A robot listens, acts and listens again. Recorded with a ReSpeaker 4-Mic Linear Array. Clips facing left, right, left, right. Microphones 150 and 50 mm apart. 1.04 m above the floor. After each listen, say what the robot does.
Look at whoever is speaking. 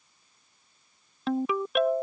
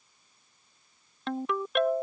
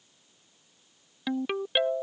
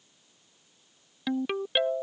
Keep listening.
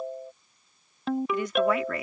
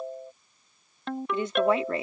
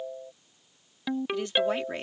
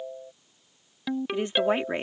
Turn 30° right.
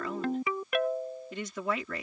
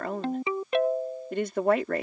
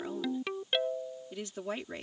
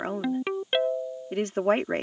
Turn 120° right.
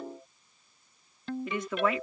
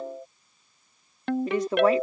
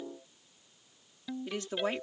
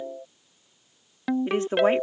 Turn 40° right.
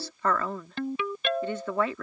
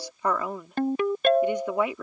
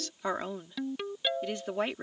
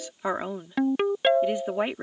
Turn 15° right.
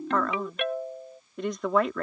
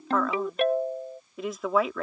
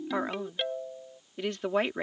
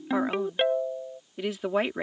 Facing the woman speaking.